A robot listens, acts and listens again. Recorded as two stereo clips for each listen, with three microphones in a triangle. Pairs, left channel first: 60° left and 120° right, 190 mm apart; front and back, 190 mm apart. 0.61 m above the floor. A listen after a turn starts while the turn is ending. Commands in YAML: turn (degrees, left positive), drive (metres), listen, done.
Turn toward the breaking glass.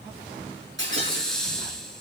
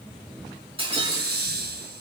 turn: -120
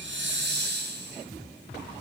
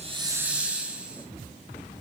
done: "Facing where the breaking glass came from. I can't hear it now."